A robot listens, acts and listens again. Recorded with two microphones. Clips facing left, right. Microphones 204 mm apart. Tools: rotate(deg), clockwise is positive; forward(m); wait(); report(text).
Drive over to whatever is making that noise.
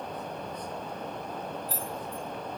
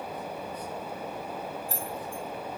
rotate(50)
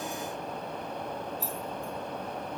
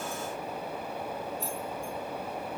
forward(1.0)
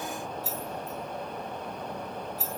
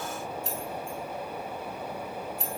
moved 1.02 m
forward(1.0)
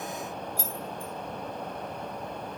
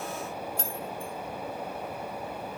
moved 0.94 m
forward(1.0)
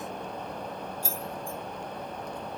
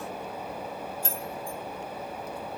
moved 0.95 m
rotate(-10)
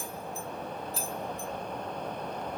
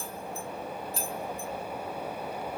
forward(1.0)
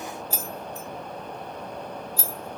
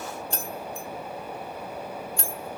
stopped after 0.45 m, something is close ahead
report("I am next to the keys jangling.")